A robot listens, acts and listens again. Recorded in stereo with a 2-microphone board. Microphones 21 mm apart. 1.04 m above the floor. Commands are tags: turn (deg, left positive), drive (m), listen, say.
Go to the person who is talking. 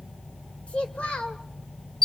<turn deg="65"/>
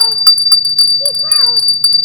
<listen/>
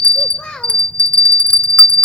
<turn deg="50"/>
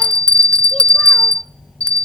<listen/>
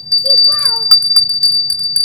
<listen/>
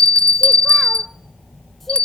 <say>I heard a child speaking from this way, but can't make it out now. I did not reach it.</say>